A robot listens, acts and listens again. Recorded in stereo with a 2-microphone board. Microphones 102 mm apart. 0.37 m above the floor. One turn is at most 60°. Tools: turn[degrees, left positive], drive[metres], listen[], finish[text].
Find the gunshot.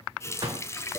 Thought: The gunshot: about 40° right or 140° right.
Action: turn[-40]
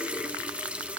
Action: listen[]
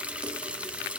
Action: finish[I heard a gunshot, but can't make it out now. It was about straight ahead or 100° right.]